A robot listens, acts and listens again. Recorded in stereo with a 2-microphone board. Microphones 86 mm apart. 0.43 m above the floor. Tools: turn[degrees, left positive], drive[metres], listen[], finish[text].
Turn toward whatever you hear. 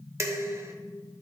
Thought: The dishes clattering: about 35° right or 145° right.
Action: turn[-35]
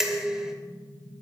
Action: finish[Facing the dishes clattering.]